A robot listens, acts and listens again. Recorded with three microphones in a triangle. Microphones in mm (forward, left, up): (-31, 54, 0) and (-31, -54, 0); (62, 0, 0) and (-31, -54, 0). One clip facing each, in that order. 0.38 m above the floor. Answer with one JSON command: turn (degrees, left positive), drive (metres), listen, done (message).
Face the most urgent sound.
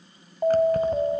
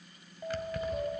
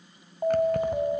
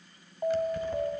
{"turn": 105}
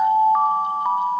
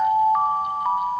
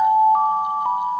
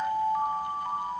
{"turn": 10}
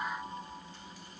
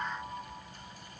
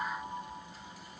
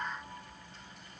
{"listen": true}
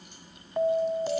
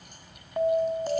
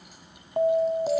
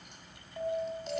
{"done": "Facing the alarm, 1 to 2 m away."}